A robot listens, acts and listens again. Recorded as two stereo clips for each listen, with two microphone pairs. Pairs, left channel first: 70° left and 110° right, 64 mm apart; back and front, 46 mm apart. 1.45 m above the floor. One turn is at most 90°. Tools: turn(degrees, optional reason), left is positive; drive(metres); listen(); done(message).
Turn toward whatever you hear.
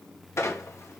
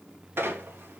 turn(degrees=30, reason="The squeak: 30° left.")
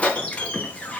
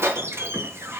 done("Found it: a squeak, straight ahead.")